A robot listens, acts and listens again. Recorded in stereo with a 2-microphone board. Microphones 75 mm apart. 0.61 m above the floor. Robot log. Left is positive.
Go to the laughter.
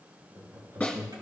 note: The laughter: about 45° right or 135° right.
cmd yaw -45
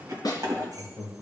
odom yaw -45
cmd fwd 1.0
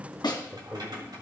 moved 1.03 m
cmd fwd 1.0
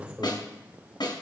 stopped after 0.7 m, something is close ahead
note: The laughter is now 10° right.
cmd yaw -10
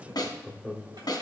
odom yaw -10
end: Arrived at the laughter, straight ahead.